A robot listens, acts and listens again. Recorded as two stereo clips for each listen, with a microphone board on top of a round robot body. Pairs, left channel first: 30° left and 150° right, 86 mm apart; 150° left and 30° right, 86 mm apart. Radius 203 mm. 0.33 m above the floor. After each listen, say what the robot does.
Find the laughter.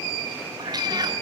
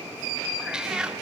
Keep listening.
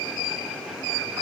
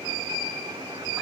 Keep listening.
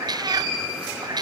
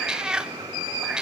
I can't make out laughter, only a cat meowing.